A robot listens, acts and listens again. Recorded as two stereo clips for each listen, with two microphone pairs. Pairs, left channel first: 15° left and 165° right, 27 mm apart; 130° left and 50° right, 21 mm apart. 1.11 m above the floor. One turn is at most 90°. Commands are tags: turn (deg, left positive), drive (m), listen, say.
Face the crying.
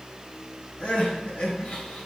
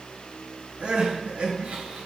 <turn deg="-35"/>
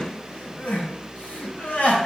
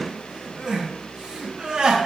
<say>Facing the crying.</say>